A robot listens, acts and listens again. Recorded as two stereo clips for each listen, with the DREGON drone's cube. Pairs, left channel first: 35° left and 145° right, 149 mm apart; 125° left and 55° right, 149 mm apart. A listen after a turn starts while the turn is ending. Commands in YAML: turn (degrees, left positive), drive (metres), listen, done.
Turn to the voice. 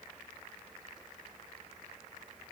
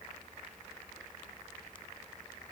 listen: true
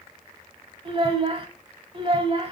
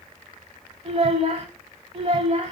turn: -95
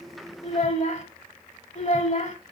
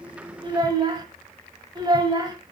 done: "Facing the child speaking."